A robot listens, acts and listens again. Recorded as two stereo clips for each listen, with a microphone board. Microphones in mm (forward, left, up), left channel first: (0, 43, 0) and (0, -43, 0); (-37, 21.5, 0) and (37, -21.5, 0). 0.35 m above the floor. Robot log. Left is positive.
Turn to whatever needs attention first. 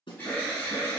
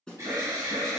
note: The alarm: 25° left.
cmd yaw +25
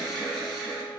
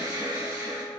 end: Facing the alarm, 2 to 4 m away.